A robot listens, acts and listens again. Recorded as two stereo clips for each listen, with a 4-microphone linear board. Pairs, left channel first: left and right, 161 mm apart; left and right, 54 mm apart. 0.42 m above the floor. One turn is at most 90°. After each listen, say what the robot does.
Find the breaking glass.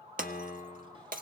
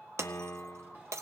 Turn 60° right.
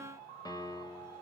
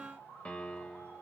Keep listening.
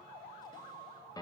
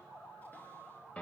I heard breaking glass, but can't make it out now. It was about straight ahead or 60° right.